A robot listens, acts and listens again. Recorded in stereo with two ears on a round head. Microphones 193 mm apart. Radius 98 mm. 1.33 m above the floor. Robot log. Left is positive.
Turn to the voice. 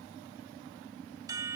cmd idle
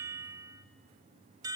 cmd idle
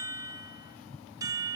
end: I can't make out anyone speaking to turn to.